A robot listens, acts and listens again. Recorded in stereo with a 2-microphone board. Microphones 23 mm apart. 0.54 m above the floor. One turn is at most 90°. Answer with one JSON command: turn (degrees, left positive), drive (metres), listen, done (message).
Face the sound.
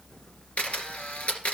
{"turn": 65}
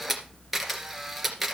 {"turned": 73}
{"done": "Found it: a camera shutter, straight ahead, 2 to 4 m away."}